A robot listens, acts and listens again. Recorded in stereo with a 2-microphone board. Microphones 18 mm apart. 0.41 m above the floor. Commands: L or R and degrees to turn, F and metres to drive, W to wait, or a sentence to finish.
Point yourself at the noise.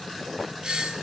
R55
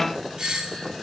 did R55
R55
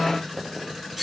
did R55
Facing the doorbell.